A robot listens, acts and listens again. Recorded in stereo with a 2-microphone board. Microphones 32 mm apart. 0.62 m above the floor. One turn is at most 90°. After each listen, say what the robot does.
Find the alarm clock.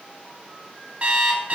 Turn 40° right.
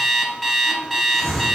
Facing the alarm clock, 1 to 2 m away.